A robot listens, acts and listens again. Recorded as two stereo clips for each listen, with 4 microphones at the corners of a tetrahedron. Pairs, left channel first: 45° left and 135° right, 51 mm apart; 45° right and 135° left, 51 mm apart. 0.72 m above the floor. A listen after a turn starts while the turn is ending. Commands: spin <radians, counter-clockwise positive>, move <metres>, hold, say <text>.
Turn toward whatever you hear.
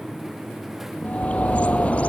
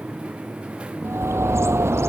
spin 1.92
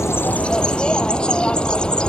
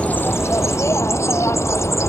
spin -0.44
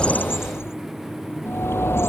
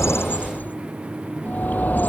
spin 0.17
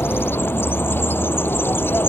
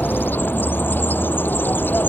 say Found it: a bird, straight ahead.